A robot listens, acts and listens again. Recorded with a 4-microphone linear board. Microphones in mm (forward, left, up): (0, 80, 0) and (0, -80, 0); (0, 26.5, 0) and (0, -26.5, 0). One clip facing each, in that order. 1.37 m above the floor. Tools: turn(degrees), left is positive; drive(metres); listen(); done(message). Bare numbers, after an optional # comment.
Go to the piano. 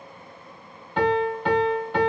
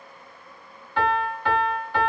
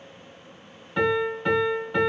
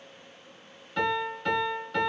# The piano: about 25° left or 155° left.
turn(25)
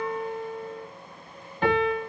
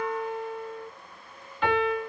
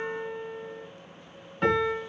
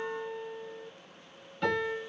# So it is at 125° left.
turn(125)
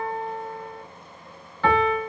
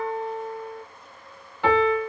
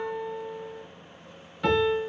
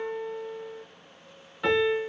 # The piano is now 15° right.
turn(-15)
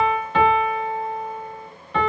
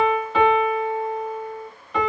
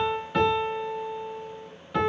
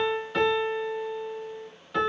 drive(1.0)
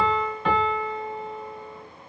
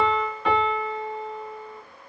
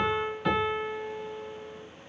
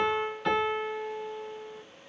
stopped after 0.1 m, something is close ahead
done("Blocked. The piano is further on, straight ahead.")